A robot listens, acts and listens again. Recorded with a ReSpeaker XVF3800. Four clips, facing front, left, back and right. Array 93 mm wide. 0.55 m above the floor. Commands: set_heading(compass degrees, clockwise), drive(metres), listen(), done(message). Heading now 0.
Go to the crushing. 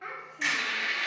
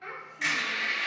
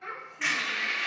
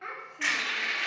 set_heading(130)
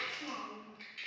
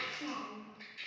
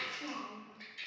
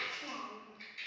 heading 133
drive(1.0)
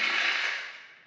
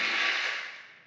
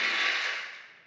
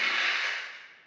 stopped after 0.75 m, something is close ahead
done("Arrived at the crushing, straight ahead.")